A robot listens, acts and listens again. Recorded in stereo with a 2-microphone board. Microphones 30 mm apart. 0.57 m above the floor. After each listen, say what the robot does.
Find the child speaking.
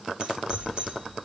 Turn 30° right.
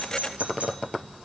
Keep listening.
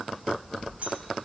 Turn 15° left.
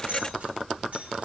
Found it: a child speaking, straight ahead, 2 to 4 m away.